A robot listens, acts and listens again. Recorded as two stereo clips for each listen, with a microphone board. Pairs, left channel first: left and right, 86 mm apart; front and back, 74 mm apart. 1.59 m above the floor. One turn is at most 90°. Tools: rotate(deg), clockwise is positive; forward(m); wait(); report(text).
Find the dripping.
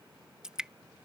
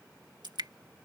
rotate(90)
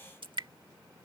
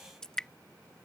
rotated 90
rotate(80)
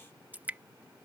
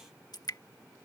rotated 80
rotate(20)
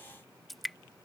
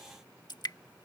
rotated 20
report("Found it: dripping, straight ahead.")